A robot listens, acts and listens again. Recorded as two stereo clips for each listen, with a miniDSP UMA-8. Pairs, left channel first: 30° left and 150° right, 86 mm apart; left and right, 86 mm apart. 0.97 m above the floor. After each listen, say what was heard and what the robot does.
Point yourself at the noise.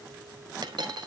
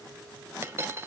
The dropped coin: 145° right. Turn 145° right.
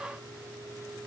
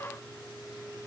I heard a dropped coin from this way, but can't make it out now.